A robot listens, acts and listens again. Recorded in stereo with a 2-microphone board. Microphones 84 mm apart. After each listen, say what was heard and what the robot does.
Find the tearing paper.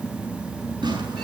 The tearing paper: about 70° right or 110° right. Turn 70° right.
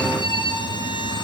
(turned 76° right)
Keep listening.
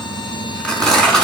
So it is at 10° left. Turn 10° left.
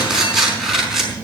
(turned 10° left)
Facing the tearing paper, over 4 m away.